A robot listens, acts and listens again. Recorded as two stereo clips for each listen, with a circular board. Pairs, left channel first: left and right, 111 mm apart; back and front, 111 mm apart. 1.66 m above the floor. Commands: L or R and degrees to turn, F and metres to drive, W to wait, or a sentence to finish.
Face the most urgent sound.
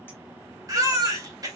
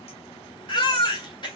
R140
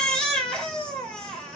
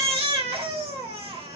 L10
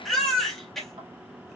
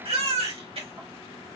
Facing the baby crying, 2 to 4 m away.